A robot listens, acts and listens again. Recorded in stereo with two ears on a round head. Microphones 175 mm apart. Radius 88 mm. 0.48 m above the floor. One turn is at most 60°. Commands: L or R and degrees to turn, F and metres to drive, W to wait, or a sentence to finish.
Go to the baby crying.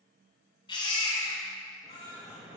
L25
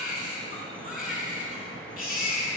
L60
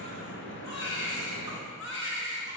L60
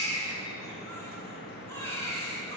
L15
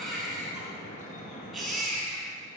F1.0
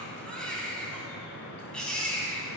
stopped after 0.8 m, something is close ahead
Something is in my way. I am facing the baby crying but have not reached it.